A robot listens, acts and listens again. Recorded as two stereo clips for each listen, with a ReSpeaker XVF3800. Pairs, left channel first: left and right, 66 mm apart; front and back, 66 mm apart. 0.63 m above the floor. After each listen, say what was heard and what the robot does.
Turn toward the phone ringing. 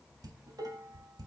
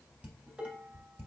Keep listening.
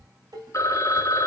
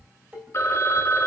The phone ringing: 50° left. Turn 50° left.
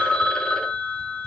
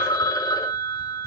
The phone ringing is now 15° left. Turn 15° left.
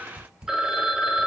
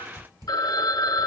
The phone ringing is now 10° right. Turn 10° right.
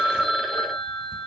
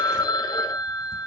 Facing the phone ringing, under 1 m away.